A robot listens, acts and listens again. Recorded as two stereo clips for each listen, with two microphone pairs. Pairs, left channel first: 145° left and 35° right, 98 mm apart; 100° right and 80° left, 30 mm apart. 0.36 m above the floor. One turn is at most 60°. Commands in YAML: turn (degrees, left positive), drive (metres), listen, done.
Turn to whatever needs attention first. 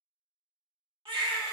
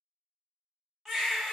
turn: -15
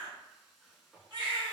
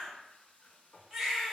done: "Found it: a baby crying, straight ahead."